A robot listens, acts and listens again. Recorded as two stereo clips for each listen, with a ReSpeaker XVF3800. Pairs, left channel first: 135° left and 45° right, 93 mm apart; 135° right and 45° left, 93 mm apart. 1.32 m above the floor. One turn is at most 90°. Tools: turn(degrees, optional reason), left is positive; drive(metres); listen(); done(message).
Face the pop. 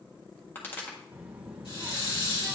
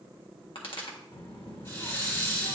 turn(degrees=-90, reason="The pop: 155° right.")
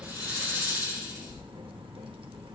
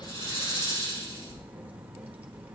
turn(degrees=-65, reason="Nothing new. It was at 65° right.")
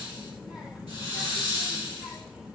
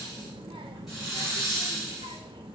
done("Facing where the pop came from. I can't hear it now.")